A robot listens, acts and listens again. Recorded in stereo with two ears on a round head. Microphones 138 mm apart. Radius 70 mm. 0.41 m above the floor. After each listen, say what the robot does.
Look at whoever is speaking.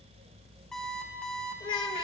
Turn 30° left.
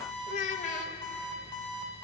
Turn 115° left.
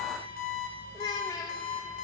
Turn 30° left.
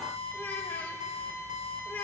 Turn 15° left.
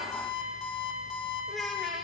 Found it: a child speaking, straight ahead, under 1 m away.